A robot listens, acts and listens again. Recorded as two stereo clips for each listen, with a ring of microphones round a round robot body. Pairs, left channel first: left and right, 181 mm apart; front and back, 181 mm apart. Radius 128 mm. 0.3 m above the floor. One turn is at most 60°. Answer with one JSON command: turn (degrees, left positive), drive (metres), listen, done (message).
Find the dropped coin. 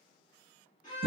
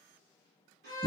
{"listen": true}
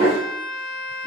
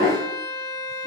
{"listen": true}
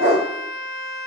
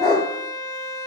{"done": "I can't make out a dropped coin, only a dog barking and a violin."}